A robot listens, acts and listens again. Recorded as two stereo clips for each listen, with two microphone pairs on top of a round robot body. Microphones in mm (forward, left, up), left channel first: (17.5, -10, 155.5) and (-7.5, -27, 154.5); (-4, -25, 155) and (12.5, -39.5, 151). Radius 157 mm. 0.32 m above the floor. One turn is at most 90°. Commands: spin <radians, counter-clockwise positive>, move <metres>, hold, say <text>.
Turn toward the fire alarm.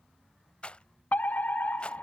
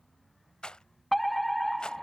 spin 0.87
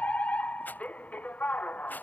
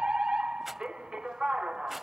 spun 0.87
say Found it: a fire alarm, straight ahead.